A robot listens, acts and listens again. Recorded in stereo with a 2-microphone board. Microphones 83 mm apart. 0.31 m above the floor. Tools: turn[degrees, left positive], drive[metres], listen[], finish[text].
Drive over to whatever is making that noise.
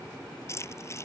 Thought: The keys jangling: about 35° left or 145° left.
Action: turn[35]
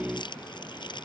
Thought: So it is at 110° left.
Action: turn[110]
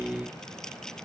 Action: listen[]
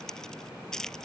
Action: drive[1.0]
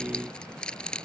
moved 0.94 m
Thought: The keys jangling is now 10° left.
Action: turn[10]
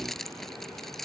Action: drive[1.0]
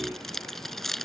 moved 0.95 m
Action: drive[1.0]
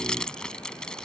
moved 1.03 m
Thought: The keys jangling is now 10° left.
Action: turn[10]
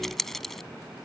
Action: drive[1.0]
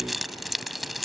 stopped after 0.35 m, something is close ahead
Action: finish[Arrived at the keys jangling, straight ahead.]